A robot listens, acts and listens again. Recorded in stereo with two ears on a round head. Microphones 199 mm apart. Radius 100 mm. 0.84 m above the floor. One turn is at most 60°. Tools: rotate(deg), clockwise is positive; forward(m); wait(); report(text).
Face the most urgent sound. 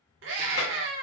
rotate(60)
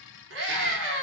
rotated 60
rotate(55)
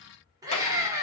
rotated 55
rotate(15)
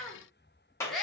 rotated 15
report("Facing the scream, 1 to 2 m away.")